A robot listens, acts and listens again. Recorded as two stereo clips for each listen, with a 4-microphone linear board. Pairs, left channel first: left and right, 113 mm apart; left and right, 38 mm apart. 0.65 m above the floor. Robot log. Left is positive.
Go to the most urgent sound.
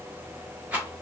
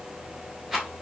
cmd idle
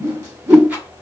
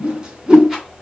cmd idle
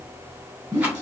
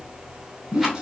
end: I can't make out anything urgent to turn to.